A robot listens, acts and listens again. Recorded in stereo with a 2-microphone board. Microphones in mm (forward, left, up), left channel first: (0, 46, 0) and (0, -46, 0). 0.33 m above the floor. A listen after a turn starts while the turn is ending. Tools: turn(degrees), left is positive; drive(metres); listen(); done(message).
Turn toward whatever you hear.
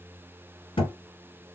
turn(degrees=65)
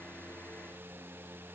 listen()
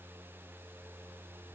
done("I heard a thud, but can't make it out now. It was about straight ahead or 50° left.")